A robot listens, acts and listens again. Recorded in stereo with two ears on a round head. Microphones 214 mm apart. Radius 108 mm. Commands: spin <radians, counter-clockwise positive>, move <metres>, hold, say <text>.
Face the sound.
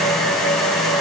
hold
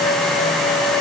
hold
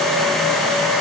say I can't make out anything.